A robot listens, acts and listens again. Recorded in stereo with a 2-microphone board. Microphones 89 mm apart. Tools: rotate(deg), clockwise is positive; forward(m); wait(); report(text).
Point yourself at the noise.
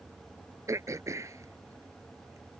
rotate(35)
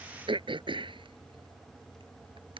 rotate(110)
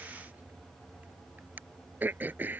rotate(20)
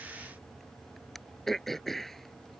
report("Found it: throat clearing, straight ahead.")